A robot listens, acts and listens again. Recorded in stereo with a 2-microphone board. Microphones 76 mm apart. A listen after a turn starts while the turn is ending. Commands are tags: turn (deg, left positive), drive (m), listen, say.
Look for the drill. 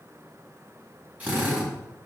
<turn deg="-20"/>
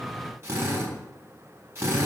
<turn deg="-140"/>
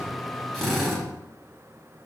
<say>Found it: a drill, straight ahead, 2 to 4 m away.</say>